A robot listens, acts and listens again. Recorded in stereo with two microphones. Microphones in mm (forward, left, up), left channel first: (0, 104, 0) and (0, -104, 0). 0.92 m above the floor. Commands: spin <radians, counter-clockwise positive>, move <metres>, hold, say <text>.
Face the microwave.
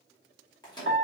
spin 0.35
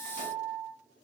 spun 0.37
hold
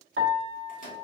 spin 2.44
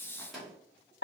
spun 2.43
say Facing the microwave.